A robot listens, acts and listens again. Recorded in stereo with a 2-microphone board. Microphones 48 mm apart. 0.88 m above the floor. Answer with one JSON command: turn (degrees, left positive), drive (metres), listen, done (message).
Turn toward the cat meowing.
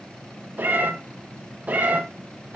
{"turn": -20}
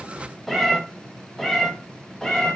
{"turn": 15}
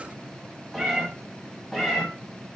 {"done": "Found it: a cat meowing, straight ahead."}